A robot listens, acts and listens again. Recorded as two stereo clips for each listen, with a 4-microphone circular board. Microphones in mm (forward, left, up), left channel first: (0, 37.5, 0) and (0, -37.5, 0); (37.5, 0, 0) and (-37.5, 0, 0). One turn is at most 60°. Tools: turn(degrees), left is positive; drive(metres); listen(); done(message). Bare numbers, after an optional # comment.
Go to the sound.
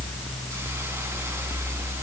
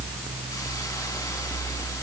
listen()
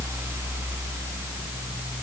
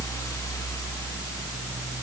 listen()
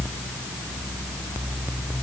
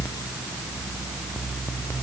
done("I can't make out anything to turn to.")